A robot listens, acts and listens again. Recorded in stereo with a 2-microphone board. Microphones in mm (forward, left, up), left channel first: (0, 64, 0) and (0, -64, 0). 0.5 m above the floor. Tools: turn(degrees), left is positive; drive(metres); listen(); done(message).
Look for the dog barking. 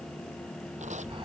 listen()
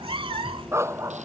turn(degrees=-25)
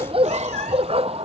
turn(degrees=-125)
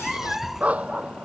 turn(degrees=-10)
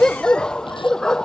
done("Found it: a dog barking, straight ahead.")